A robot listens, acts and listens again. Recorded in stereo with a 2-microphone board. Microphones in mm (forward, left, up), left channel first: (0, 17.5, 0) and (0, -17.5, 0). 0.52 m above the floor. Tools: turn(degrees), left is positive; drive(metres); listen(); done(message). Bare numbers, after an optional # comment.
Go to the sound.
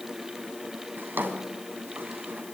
turn(-90)
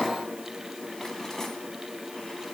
# So it is at 15° left.
turn(15)
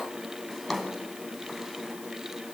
drive(1.0)
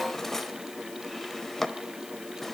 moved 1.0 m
# The drawer is now 10° left.
turn(10)
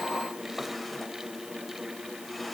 listen()
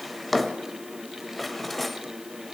drive(1.0)
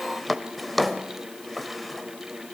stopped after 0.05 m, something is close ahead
done("I am next to the drawer.")